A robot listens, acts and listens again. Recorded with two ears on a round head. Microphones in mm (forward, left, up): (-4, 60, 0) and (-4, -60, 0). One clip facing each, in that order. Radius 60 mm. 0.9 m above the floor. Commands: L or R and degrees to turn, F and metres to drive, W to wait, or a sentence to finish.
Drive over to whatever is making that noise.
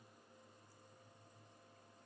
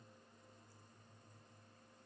W
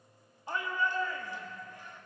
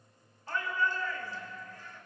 L15
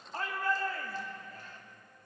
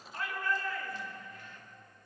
L150
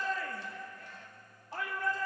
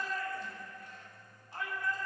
L65
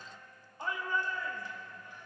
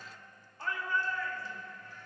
L20
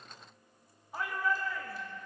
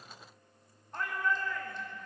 F1.0
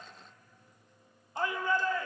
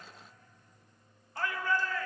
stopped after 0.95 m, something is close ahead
L25
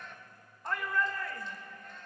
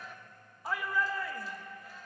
Arrived at the shout, straight ahead.